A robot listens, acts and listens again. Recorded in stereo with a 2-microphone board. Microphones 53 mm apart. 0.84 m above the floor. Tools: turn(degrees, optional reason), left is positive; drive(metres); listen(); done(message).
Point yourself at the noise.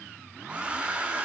turn(degrees=-20, reason="The hair dryer: about 20° right or 160° right.")
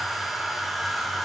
done("Found it: a hair dryer, straight ahead, under 1 m away.")